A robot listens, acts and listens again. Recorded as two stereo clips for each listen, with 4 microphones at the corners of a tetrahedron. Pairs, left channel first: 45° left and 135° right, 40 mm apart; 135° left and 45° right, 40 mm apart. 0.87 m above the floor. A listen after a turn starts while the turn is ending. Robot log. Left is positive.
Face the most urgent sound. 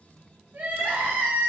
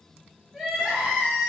note: The crying: 115° right.
cmd yaw -115
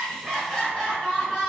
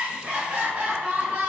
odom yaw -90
note: The crying is now 25° right.
cmd yaw -25
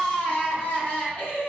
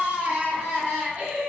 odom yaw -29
end: Facing the crying, 1 to 2 m away.